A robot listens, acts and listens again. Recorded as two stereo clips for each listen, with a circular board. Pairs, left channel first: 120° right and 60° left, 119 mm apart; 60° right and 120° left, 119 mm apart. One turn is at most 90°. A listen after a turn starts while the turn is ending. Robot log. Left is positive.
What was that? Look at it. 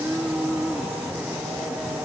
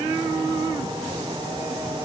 cmd idle
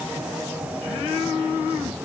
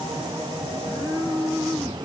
cmd idle
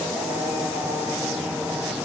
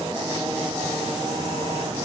end: I can't make out anything to turn to.